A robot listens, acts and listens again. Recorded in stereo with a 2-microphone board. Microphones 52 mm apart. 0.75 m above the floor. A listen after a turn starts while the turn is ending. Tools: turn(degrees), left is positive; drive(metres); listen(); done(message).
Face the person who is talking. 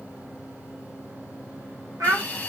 turn(degrees=-75)
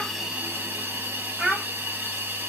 turn(degrees=-20)
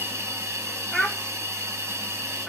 done("Found it: a child speaking, straight ahead, 1 to 2 m away.")